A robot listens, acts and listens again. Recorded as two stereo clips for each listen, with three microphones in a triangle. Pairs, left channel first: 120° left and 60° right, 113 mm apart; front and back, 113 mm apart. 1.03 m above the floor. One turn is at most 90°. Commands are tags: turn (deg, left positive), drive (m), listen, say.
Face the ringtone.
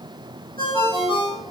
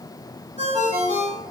<turn deg="90"/>
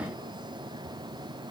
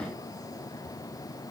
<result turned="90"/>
<turn deg="70"/>
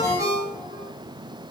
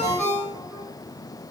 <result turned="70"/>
<say>Facing the ringtone.</say>